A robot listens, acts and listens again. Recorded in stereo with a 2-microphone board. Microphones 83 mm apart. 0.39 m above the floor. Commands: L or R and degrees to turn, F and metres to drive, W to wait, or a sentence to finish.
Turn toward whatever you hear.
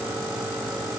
W
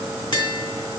L70
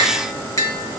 L40
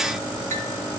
W
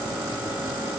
W
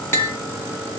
L30
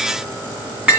R15
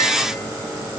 W
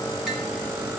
W
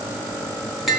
Facing the tapping, 2 to 4 m away.